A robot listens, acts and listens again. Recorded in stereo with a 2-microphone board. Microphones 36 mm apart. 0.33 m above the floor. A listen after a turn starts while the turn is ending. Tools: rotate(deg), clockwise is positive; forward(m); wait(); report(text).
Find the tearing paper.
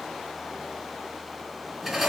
wait()
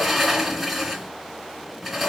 wait()
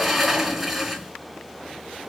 report("I can't make out tearing paper, only a sliding door.")